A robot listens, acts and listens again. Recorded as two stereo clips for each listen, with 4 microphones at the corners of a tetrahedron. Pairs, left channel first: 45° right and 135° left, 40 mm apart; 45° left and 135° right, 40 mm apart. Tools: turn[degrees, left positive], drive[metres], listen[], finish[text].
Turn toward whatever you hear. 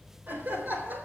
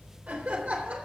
Thought: The laughter: 165° left.
Action: turn[165]
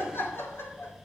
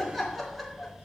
Thought: The laughter is now 50° right.
Action: turn[-50]
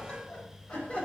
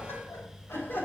Thought: The laughter is now 10° left.
Action: turn[10]
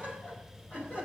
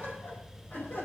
Action: finish[Facing the laughter, over 4 m away.]